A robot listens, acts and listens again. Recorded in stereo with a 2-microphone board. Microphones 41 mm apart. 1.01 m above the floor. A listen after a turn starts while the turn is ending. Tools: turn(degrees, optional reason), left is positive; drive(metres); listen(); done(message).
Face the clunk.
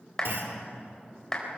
turn(degrees=-70, reason="The clunk: about 70° right or 110° right.")
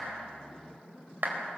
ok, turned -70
listen()
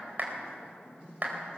done("I heard a clunk, but can't make it out now. It was about straight ahead or 40° right.")